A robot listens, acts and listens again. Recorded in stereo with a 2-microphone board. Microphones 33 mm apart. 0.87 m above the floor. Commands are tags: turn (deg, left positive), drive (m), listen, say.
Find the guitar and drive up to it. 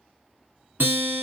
<turn deg="-90"/>
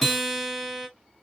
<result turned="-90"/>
<drive m="1.0"/>
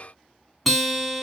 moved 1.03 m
<drive m="1.0"/>
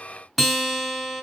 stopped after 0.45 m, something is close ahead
<say>Arrived at the guitar, straight ahead.</say>